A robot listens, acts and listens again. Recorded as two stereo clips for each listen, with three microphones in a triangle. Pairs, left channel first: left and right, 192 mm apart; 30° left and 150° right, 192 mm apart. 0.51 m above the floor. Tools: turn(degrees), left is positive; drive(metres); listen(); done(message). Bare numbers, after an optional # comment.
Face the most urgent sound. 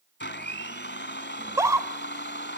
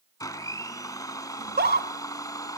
# The scream: 160° right.
turn(-160)
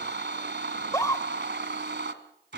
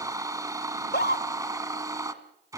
# The scream is now 20° left.
turn(20)
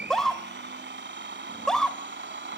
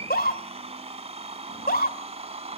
done("Facing the scream, 1 to 2 m away.")